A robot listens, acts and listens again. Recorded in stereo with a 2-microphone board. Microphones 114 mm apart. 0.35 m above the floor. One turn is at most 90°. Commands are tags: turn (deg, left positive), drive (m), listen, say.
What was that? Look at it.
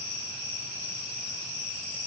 <listen/>
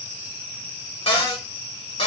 <turn deg="55"/>
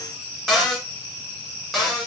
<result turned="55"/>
<say>Facing the cupboard door.</say>